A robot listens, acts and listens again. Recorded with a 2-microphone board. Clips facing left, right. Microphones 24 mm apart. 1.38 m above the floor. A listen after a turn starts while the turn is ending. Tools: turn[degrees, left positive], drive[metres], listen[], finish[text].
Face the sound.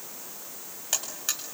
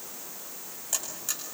Thought: The buzzer: about 50° left or 130° left.
Action: turn[50]
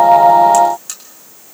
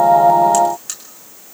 Action: finish[Facing the buzzer, over 4 m away.]